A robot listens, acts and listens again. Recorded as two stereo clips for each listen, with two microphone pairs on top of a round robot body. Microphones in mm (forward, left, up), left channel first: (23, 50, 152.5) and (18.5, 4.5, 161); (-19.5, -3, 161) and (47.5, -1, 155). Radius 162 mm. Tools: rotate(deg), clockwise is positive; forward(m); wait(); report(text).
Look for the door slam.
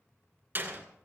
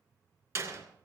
rotate(40)
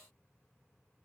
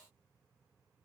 report("I heard a door slam from this way, but can't make it out now.")